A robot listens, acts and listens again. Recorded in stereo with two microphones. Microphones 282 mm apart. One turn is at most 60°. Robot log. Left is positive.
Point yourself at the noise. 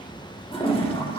note: The toilet flushing: about 20° left or 160° left.
cmd yaw +20
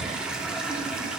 end: Facing the toilet flushing, 1 to 2 m away.